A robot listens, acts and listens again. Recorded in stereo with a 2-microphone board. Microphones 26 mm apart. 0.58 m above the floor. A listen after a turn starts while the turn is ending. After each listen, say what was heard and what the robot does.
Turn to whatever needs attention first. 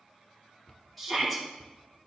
Turn 30° left.
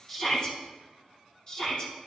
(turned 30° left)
So it is at 145° left. Turn 145° left.
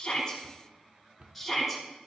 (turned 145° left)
Found it: a shout, straight ahead, over 4 m away.